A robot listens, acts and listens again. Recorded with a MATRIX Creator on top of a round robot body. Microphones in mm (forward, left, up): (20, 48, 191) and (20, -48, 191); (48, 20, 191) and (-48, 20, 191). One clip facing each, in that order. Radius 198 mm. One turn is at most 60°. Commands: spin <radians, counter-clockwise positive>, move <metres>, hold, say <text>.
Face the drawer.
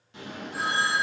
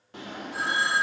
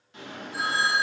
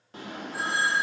spin -1.05
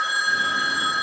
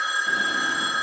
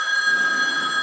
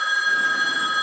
spin -1.05
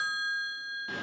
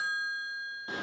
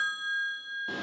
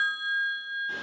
spin -0.35
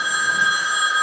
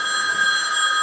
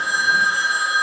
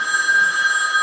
hold
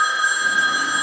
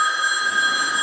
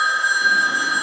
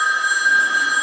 hold
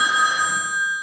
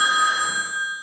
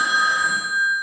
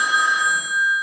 say I heard a drawer from this way, but can't make it out now.